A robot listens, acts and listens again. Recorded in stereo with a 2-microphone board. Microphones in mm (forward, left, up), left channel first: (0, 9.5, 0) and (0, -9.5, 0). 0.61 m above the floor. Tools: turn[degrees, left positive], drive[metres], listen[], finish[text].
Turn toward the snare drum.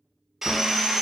Action: listen[]
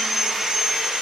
Action: listen[]
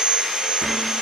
Action: finish[I can't make out a snare drum to turn to.]